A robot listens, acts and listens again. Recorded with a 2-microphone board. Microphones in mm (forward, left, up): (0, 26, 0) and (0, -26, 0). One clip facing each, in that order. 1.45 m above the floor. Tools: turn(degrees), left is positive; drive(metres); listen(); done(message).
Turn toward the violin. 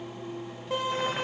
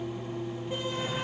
turn(degrees=90)
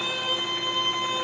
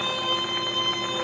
turn(degrees=10)
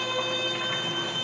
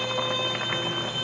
done("Facing the violin, over 4 m away.")